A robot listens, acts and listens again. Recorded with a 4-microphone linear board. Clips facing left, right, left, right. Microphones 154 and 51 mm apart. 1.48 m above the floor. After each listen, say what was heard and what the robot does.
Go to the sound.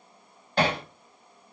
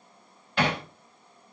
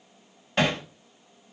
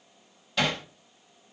The hammering: about 35° left or 145° left. Turn 35° left.
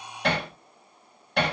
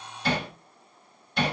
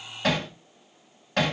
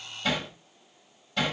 So it is at 110° left. Turn 110° left.
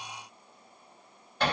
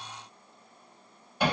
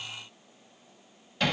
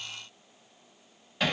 The hammering is now 10° right. Turn 10° right.
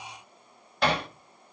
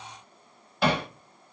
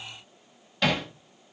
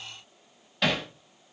Drive 1.0 m forward.
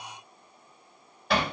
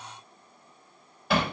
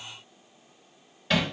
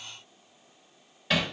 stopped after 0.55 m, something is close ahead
Something is in my way. I am facing the hammering but have not reached it.